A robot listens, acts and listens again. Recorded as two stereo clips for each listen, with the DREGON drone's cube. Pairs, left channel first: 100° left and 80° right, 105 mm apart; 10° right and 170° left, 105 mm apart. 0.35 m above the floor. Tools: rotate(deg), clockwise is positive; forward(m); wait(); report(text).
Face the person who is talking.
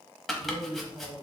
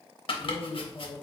rotate(75)
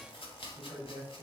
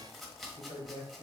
rotate(10)
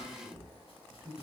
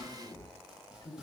report("Facing the man speaking, 1 to 2 m away.")